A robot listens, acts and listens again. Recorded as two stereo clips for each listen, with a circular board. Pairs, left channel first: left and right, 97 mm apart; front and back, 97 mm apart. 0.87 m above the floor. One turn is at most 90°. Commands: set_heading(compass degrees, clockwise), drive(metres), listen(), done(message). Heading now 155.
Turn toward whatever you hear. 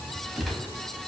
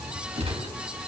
set_heading(65)
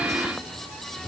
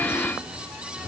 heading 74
set_heading(344)
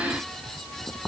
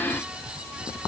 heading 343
set_heading(333)
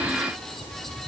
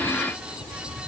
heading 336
done("I heard a gunshot from this way, but can't make it out now.")